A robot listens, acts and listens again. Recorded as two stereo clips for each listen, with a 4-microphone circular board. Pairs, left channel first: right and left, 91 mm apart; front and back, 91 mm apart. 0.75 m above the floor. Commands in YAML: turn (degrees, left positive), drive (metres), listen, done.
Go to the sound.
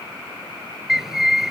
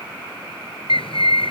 drive: 1.0
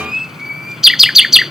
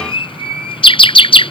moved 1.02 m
drive: 1.0
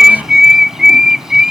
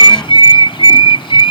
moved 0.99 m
drive: 1.0
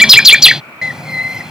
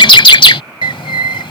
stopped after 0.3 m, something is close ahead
done: "I am next to the bird."